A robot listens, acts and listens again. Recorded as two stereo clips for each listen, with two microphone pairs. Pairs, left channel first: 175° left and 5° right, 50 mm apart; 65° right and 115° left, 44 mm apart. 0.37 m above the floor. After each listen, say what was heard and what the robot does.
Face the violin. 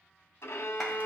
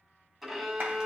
The violin: 165° right. Turn 165° right.
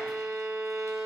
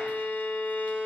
The violin is now 30° right. Turn 30° right.
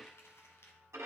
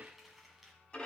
Facing the violin.